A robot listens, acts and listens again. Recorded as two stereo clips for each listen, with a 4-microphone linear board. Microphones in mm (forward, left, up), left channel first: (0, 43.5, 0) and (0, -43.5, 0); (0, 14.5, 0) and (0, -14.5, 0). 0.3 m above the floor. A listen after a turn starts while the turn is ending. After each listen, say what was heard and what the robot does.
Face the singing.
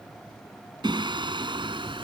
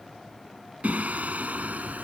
The singing: about 70° right or 110° right. Turn 70° right.
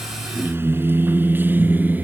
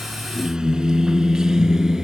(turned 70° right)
So it is at 20° right. Turn 20° right.
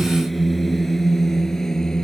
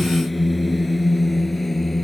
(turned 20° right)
Found it: singing, straight ahead.